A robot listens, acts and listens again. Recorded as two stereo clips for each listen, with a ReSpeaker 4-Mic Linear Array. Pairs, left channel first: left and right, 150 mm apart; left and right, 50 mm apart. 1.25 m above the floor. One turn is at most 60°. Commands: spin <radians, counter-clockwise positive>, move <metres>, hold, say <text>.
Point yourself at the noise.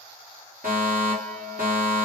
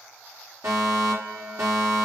spin -1.05
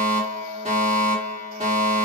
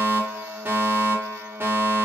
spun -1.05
spin -0.79
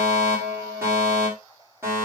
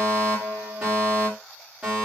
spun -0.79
spin -0.26
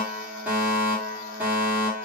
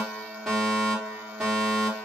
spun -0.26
spin -0.17
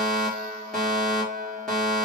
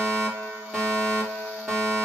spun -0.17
say Found it: a fire alarm, straight ahead, over 4 m away.